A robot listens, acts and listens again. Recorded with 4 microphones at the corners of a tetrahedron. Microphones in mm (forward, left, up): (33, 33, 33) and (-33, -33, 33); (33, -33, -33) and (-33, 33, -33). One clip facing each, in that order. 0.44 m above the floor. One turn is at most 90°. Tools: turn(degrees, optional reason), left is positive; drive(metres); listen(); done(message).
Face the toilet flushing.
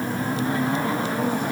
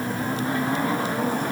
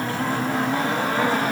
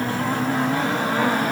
listen()
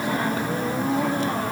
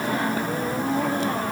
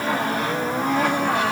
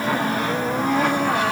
listen()
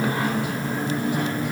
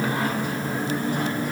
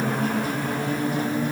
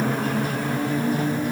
done("I can't make out a toilet flushing to turn to.")